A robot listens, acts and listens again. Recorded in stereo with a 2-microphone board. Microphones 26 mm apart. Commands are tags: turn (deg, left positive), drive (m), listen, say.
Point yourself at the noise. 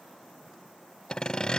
<turn deg="30"/>
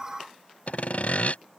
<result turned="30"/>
<turn deg="120"/>
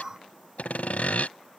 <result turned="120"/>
<turn deg="65"/>
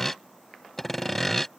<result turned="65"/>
<turn deg="10"/>
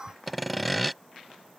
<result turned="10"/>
<say>Facing the sawing.</say>